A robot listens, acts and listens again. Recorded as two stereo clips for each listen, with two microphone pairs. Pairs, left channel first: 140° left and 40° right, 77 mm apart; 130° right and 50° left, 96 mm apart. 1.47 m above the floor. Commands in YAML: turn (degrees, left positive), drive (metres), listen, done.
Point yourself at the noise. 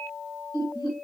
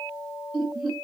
turn: 135
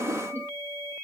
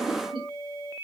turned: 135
turn: 15
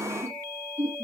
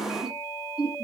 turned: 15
turn: 25
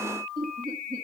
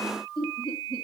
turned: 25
done: "Found it: laughter, straight ahead, 2 to 4 m away."